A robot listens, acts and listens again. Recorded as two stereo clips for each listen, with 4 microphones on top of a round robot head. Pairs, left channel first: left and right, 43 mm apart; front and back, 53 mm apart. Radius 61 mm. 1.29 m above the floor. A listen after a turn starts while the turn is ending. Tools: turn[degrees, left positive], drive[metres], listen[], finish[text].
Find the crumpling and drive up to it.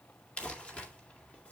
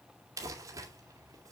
Thought: The crumpling: 155° left.
Action: turn[155]
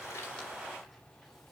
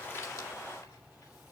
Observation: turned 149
Action: listen[]
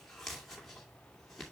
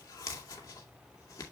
Action: drive[1.0]
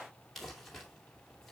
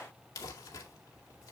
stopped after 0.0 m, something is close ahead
Action: finish[Blocked. The crumpling is further on, straight ahead.]